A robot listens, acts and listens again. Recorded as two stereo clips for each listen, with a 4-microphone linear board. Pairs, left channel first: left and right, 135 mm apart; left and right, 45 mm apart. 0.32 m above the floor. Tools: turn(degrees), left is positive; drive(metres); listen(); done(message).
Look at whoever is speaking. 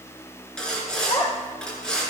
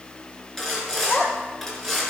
turn(degrees=50)
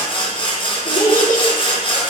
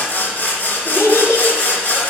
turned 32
turn(degrees=100)
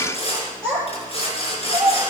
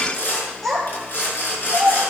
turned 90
done("Found it: a child speaking, straight ahead, over 4 m away.")